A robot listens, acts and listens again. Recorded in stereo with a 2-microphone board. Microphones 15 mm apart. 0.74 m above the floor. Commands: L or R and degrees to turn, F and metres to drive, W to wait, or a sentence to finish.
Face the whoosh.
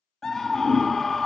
R30
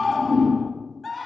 R120
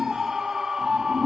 L30
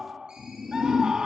Facing the whoosh.